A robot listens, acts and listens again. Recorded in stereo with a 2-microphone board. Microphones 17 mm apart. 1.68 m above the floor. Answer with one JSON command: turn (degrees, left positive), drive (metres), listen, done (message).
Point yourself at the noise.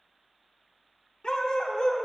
{"turn": 55}
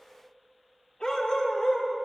{"turn": 55}
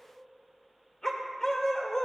{"turn": 30}
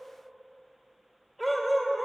{"done": "Facing the dog barking."}